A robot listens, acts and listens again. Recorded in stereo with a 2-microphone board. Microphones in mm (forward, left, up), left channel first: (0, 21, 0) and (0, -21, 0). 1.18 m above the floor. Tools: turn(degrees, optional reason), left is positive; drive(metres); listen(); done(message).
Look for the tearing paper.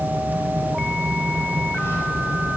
listen()
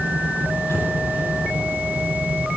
listen()
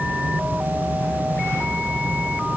done("I can't make out tearing paper to turn to.")